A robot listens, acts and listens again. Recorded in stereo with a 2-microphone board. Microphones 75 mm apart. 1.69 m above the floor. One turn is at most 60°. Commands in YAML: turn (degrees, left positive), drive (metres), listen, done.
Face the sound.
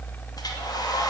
turn: 60
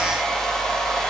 done: "Found it: a hair dryer, straight ahead, 2 to 4 m away."